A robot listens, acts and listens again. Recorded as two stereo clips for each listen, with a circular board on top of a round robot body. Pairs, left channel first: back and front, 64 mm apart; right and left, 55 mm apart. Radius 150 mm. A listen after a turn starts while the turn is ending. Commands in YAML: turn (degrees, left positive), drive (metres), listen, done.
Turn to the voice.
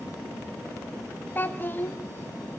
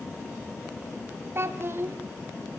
turn: 125
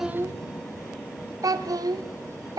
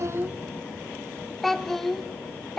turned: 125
done: "Facing the child speaking, 1 to 2 m away."